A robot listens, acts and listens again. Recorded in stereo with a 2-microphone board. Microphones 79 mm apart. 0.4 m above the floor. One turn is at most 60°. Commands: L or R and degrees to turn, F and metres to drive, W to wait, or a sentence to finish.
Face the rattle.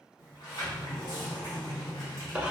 W
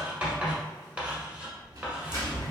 R50
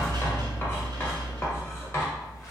R60
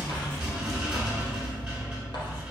R15
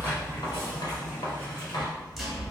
Facing the rattle.